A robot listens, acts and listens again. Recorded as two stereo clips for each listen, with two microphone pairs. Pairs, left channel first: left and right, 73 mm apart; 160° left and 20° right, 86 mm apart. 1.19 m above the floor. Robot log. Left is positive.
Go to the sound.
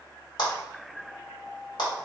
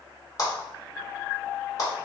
note: The clap: 110° left.
cmd yaw +110
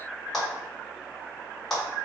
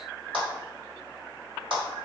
cmd fwd 1.0
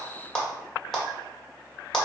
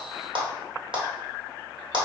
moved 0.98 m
cmd fwd 1.0
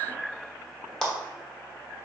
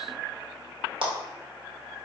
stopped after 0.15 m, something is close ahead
end: Arrived at the clap, straight ahead.